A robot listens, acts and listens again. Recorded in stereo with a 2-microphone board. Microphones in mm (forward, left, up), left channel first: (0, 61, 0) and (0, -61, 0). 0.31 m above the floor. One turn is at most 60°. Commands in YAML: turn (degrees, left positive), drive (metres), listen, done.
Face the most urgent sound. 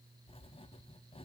listen: true
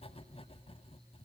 listen: true
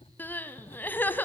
turn: 15
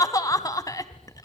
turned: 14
turn: 60
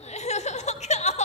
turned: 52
turn: 60
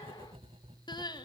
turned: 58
turn: 40
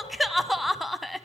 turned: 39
done: "Facing the crying."